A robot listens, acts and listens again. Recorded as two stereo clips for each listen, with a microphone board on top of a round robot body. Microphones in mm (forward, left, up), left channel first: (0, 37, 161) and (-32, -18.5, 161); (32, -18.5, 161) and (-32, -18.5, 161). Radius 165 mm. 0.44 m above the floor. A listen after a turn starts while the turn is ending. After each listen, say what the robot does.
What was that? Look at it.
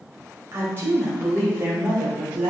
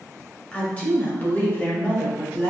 Turn 50° right.
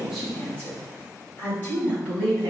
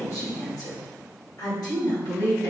Found it: a woman speaking, straight ahead.